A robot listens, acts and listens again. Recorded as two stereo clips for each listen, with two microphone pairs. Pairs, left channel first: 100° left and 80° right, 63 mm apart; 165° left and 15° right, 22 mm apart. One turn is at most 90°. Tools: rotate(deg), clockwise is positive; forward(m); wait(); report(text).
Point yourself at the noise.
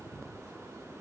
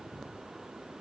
wait()
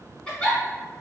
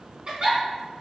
rotate(-30)
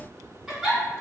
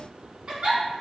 rotate(-10)
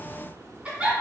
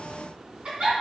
report("Found it: a giggle, straight ahead, 1 to 2 m away.")